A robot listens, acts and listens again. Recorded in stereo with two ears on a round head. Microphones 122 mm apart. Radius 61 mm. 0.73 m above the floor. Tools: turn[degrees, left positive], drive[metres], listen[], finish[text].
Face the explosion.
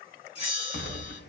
Action: turn[90]
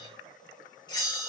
Action: finish[I heard an explosion from this way, but can't make it out now.]